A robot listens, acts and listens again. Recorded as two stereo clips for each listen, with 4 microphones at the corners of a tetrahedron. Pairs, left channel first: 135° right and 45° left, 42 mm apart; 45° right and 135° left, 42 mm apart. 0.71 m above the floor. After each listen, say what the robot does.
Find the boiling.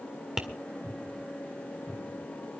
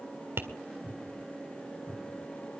Keep listening.
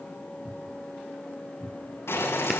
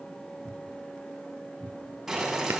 Turn 140° right.
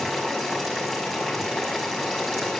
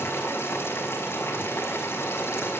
Turn 40° right.
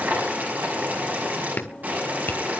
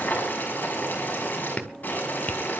Found it: boiling, straight ahead.